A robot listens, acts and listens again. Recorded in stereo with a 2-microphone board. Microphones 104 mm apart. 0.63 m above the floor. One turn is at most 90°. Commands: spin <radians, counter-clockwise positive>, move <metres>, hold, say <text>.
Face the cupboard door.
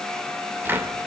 spin -0.35
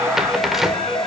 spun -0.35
say Facing the cupboard door, 2 to 4 m away.